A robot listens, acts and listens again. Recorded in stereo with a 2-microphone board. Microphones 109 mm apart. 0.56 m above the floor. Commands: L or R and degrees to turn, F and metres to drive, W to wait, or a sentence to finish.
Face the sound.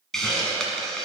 L30
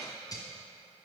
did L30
L145
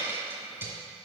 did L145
R20
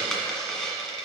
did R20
Found it: a hiss, straight ahead.